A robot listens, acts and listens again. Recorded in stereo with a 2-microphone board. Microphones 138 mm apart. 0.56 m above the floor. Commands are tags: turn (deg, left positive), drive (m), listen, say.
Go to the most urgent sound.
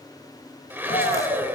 <turn deg="60"/>
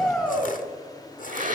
<drive m="1.0"/>
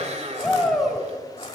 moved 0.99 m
<drive m="1.0"/>
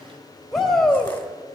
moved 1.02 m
<drive m="1.0"/>
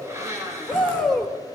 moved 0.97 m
<drive m="1.0"/>
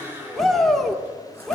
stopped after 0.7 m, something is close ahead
<say>Arrived at the shout, straight ahead.</say>